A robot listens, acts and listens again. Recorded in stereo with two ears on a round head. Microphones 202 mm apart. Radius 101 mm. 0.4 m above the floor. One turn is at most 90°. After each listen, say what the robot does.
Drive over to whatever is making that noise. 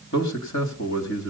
Turn 55° left.
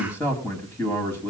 Turn 10° left.
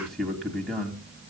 Drive 1.0 m forward.
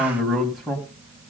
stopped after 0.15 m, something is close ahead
Something is in my way. I am facing the man speaking but have not reached it.